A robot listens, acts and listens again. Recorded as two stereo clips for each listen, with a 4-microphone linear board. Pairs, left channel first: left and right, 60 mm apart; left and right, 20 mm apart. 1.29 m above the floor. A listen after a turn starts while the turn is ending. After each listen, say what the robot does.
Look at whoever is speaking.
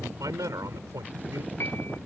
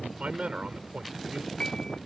Turn 90° right.
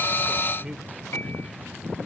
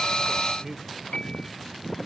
Turn 15° right.
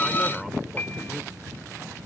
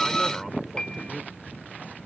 Keep listening.
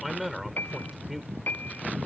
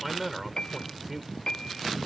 Facing the man speaking.